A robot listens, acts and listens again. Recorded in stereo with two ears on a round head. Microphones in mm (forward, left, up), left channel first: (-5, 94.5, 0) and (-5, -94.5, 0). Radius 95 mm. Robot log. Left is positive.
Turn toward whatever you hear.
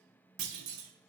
note: The clunk: about 70° right or 110° right.
cmd yaw -70
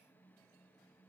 cmd idle
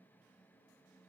end: I heard a clunk, but can't make it out now. It was about straight ahead or 40° right.